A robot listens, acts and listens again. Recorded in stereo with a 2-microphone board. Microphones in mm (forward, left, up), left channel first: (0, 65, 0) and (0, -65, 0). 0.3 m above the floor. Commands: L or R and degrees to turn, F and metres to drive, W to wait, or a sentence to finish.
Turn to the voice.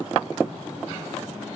W
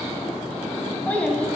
L30
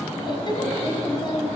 L135
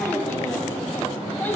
L15
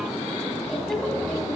W
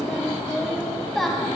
Found it: a child speaking, straight ahead.